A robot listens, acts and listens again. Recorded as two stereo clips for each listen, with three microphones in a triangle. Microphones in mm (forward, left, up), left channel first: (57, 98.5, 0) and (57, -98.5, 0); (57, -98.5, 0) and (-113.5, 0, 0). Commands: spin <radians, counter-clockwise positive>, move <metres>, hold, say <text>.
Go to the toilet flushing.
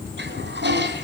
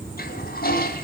spin -1.13
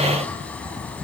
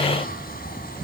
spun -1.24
hold
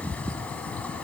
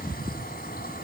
hold
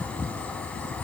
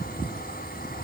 say Facing where the toilet flushing came from. I can't hear it now. I did not reach it.